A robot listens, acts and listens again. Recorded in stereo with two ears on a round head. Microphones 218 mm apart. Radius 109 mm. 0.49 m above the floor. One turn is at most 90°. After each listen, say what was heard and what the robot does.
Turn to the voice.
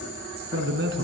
The man speaking: about 50° right or 130° right. Turn 50° right.
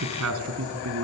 So it is at 70° right. Turn 70° right.
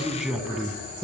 Found it: a man speaking, straight ahead.